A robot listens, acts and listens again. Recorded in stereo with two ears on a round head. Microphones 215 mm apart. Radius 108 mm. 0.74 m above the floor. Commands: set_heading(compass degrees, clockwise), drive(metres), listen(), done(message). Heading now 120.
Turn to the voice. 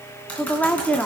set_heading(90)
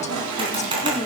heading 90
set_heading(305)
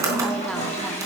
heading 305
listen()
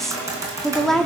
done("Facing the woman speaking, 1 to 2 m away.")